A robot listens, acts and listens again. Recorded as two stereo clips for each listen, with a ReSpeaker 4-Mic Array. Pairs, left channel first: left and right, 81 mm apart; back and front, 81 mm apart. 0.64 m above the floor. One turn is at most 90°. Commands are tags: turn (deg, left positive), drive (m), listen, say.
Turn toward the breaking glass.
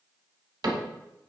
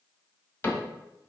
<listen/>
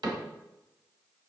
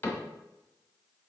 <listen/>
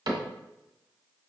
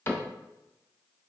<say>I can't make out breaking glass to turn to.</say>